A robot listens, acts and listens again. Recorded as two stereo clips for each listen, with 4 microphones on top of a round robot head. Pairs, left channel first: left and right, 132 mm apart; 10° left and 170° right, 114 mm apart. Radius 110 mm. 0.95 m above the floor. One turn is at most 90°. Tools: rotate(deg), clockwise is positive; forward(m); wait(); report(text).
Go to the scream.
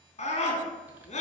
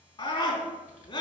rotate(-50)
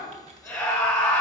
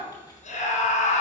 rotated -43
forward(1.0)
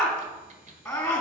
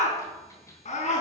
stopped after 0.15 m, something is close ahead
rotate(-10)
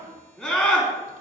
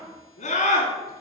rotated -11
report("Something is in my way. I am facing the scream but have not reached it.")